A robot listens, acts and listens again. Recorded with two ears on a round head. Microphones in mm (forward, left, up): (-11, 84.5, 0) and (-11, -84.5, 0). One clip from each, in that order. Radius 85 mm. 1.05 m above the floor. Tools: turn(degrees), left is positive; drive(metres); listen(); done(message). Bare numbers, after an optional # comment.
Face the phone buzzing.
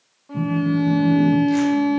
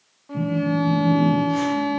# The phone buzzing: about 45° left or 135° left.
turn(45)
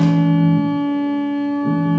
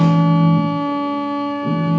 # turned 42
done("Facing the phone buzzing, under 1 m away.")